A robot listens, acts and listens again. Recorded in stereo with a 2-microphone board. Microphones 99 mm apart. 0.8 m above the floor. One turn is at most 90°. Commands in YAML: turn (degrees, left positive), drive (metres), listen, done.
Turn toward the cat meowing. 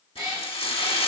turn: -40
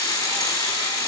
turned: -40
listen: true
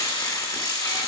listen: true
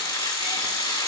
done: "I heard a cat meowing, but can't make it out now. It was about straight ahead or 100° right."